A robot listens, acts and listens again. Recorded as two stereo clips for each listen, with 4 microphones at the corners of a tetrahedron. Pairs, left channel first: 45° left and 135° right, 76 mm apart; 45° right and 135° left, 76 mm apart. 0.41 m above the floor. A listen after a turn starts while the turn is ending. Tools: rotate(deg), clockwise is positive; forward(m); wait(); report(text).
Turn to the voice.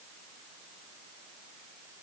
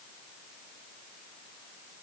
wait()
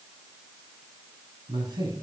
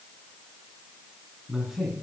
rotate(140)
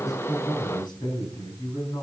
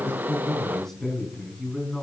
rotate(-40)
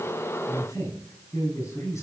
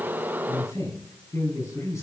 report("Found it: a man speaking, straight ahead.")